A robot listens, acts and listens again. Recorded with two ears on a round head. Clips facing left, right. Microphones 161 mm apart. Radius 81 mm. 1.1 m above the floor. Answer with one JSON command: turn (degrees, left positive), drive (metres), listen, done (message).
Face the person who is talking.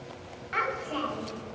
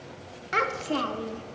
{"turn": -55}
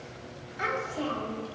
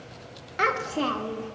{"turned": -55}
{"turn": -70}
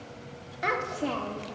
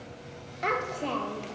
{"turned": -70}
{"done": "Found it: a child speaking, straight ahead."}